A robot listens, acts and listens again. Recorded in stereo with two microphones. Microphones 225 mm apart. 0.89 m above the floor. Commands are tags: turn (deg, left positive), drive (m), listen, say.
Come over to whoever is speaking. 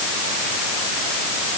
<listen/>
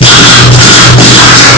<listen/>
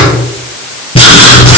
<say>I can't make out anyone speaking to turn to.</say>